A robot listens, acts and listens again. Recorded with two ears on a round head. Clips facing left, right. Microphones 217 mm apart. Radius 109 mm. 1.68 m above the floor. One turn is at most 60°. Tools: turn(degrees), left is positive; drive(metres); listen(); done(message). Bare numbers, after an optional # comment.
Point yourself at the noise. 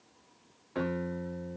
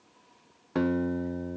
# The guitar: about 65° right or 115° right.
turn(-60)
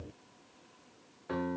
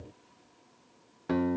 # So it is at 60° right.
turn(-60)
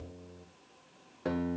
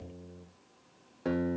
done("Found it: a guitar, straight ahead, 1 to 2 m away.")